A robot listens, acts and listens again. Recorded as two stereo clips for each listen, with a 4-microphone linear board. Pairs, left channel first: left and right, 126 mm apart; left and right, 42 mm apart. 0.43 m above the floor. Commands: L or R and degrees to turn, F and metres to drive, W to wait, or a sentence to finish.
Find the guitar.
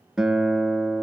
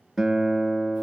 R30
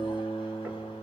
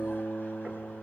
L25
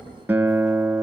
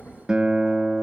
R15
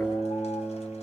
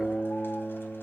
Facing the guitar, 1 to 2 m away.